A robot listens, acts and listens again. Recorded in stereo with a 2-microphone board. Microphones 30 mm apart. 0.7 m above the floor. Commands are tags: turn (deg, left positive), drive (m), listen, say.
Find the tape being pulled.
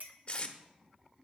<turn deg="45"/>
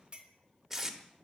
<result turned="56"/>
<turn deg="-10"/>
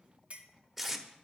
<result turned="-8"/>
<say>Facing the tape being pulled, under 1 m away.</say>